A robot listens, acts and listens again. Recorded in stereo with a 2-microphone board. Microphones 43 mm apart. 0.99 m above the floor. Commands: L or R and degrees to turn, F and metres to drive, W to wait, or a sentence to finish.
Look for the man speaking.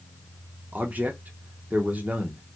R35
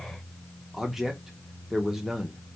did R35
Found it: a man speaking, straight ahead, under 1 m away.